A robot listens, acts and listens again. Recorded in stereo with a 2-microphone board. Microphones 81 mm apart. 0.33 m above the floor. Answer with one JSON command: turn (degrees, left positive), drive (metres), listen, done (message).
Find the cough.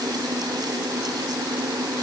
{"listen": true}
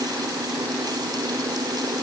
{"listen": true}
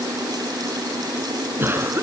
{"turn": -30}
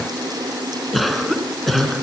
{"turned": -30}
{"done": "Found it: a cough, straight ahead."}